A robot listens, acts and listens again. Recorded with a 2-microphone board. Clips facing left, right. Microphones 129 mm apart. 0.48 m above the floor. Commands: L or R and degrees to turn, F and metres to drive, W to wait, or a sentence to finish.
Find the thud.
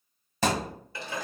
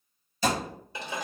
L90
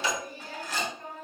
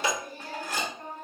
I heard a thud from this way, but can't make it out now.